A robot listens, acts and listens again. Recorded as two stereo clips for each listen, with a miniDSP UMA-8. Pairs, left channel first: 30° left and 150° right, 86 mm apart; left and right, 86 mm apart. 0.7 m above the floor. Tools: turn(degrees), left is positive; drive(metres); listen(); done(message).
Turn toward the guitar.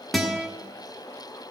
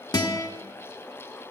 turn(degrees=120)
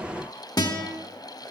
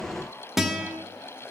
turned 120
done("Facing the guitar, 1 to 2 m away.")